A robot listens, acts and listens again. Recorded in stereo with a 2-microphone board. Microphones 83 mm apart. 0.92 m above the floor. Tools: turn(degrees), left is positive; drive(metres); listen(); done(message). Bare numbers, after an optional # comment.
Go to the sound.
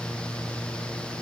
listen()
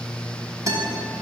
# The guitar: about 45° right or 135° right.
turn(-45)
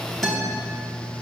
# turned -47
drive(1.0)
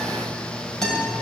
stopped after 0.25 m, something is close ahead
done("Blocked. The guitar is further on, straight ahead.")